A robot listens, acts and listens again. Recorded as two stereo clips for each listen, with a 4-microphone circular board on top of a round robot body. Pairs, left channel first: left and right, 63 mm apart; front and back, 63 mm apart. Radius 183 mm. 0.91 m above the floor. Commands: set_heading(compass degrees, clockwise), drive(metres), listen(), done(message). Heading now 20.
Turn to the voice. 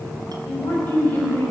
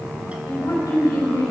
set_heading(355)
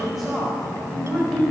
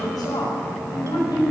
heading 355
done("Facing the woman speaking.")